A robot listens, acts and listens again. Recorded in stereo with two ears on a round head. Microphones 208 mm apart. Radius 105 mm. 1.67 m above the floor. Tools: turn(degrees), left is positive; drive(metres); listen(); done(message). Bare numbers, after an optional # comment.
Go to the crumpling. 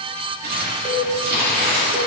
# The crumpling: about 45° right or 135° right.
turn(-45)
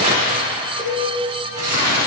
# So it is at 85° right.
turn(-85)
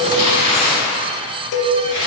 # The crumpling is now 25° right.
turn(-25)
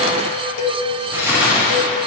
# The crumpling is now 10° right.
turn(-10)
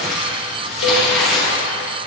drive(1.0)
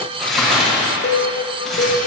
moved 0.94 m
drive(1.0)
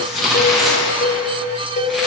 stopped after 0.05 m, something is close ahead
done("I am next to the crumpling.")